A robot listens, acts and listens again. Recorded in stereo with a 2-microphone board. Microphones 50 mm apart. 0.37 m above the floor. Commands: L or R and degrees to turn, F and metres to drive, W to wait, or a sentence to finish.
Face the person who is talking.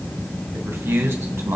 R65
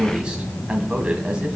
R25
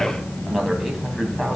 Facing the man speaking.